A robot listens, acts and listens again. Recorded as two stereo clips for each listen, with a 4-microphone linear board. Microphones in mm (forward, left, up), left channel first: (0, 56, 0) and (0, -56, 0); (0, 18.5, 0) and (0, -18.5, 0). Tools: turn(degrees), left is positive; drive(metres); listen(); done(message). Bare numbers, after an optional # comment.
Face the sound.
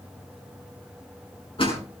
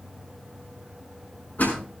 # The door slam: about 55° left or 125° left.
turn(55)
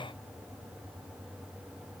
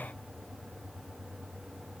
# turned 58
listen()
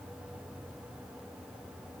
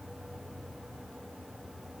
done("I heard a door slam, but can't make it out now. It was about 5° right or 70° left.")